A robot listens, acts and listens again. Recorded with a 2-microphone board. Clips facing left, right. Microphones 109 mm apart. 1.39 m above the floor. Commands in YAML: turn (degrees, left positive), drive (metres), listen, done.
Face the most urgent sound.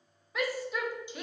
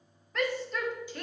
turn: 30
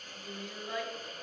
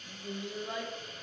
turn: -25
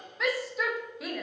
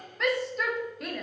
done: "Facing the shout."